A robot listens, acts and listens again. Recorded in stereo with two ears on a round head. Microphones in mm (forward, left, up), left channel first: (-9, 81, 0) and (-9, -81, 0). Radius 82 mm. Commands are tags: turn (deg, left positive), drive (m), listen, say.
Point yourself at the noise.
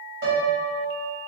<turn deg="-90"/>
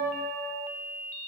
<turn deg="-10"/>
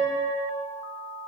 <say>Facing the piano.</say>